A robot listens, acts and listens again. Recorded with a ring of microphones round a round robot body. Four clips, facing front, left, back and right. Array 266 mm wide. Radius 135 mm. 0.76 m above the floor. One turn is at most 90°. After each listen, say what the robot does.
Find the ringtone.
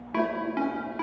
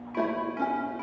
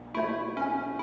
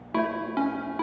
Turn 70° right.
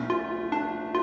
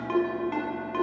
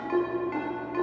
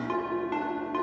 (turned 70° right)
Found it: a ringtone, straight ahead, over 4 m away.